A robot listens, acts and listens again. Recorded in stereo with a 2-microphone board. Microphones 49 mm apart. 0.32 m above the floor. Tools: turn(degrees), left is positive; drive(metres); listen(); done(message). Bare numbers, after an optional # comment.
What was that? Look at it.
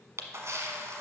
# The camera shutter: about 75° right or 105° right.
turn(-75)
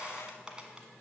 # So it is at 20° right.
turn(-20)
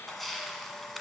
done("Found it: a camera shutter, straight ahead, 1 to 2 m away.")